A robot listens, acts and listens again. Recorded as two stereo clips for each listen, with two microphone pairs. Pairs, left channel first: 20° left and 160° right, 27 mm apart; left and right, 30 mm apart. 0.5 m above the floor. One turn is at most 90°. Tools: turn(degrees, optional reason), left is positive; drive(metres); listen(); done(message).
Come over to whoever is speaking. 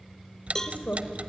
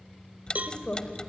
turn(degrees=40, reason="The woman speaking: 40° left.")
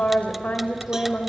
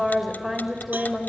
drive(metres=1.0)
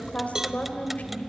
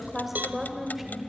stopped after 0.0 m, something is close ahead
done("Blocked. The woman speaking is further on, straight ahead.")